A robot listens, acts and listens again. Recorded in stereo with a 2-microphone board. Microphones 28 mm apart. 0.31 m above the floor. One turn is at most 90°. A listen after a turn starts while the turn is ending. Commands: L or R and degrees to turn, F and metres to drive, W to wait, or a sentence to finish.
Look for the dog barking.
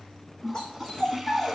L25
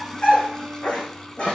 L90
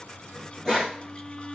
L25
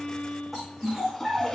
Found it: a dog barking, straight ahead.